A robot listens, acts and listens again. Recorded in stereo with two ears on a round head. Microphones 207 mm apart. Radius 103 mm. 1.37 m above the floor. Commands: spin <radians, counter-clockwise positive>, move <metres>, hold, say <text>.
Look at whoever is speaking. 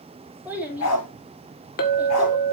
spin -0.52
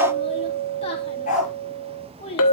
spin 0.44
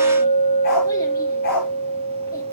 hold
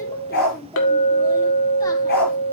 spin 0.26
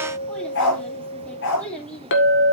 say Found it: a child speaking, straight ahead, 2 to 4 m away.